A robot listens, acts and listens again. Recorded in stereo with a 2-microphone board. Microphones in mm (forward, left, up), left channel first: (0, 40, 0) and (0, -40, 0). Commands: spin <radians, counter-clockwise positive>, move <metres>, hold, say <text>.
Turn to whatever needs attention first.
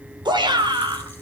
spin -1.22
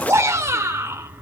spin -0.61
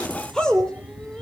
spin 0.17
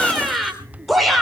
say Facing the shout.